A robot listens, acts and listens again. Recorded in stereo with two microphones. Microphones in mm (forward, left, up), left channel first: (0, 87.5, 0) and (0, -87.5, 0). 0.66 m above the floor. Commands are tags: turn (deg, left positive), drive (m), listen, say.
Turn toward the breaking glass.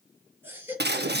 <turn deg="-75"/>
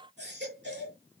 <listen/>
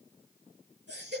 <say>I heard breaking glass, but can't make it out now. It was about straight ahead or 30° right.</say>